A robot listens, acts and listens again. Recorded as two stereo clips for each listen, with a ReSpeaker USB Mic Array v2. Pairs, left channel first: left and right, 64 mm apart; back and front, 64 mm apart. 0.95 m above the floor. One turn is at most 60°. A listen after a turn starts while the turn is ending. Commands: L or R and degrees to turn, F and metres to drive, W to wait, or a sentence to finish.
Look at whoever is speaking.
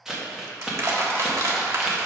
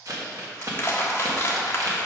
W
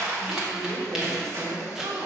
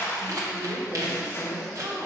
R60
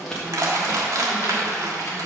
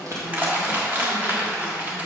W
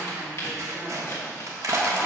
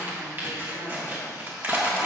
W
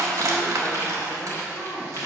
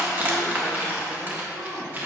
Facing the woman speaking, 2 to 4 m away.